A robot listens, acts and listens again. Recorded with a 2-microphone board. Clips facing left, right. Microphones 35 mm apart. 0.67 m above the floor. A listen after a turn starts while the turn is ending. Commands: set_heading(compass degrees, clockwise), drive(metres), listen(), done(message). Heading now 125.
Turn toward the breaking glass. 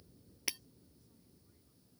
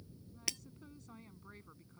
set_heading(95)
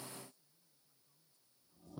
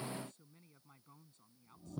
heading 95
listen()
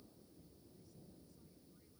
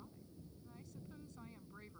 done("I heard breaking glass, but can't make it out now. It was about 15° right or 135° left.")